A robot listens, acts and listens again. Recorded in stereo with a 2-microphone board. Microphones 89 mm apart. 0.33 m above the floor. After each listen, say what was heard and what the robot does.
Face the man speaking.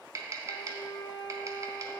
Keep listening.
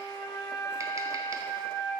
Keep listening.
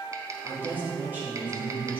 The man speaking: about 25° right or 155° right. Turn 25° right.
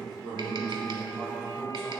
So it is at 130° right. Turn 130° right.
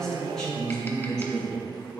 The man speaking is now 10° left. Turn 10° left.
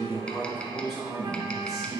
Found it: a man speaking, straight ahead.